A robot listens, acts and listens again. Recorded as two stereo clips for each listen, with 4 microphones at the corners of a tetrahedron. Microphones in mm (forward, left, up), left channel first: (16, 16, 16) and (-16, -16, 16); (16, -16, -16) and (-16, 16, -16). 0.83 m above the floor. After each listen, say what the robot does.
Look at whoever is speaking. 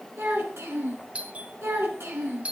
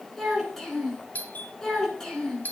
Turn 120° right.
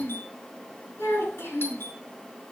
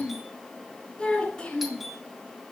Turn 25° left.
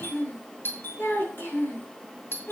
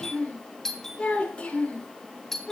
Turn 15° left.
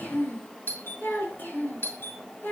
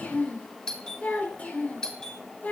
Found it: a child speaking, straight ahead, over 4 m away.